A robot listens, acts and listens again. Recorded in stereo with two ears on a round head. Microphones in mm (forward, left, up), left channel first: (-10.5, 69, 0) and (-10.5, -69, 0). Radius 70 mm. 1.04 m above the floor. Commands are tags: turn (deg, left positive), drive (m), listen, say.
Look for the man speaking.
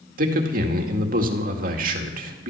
<turn deg="-60"/>
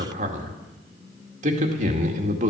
<turn deg="-50"/>
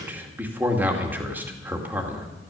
<turn deg="-15"/>
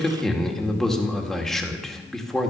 <say>Found it: a man speaking, straight ahead.</say>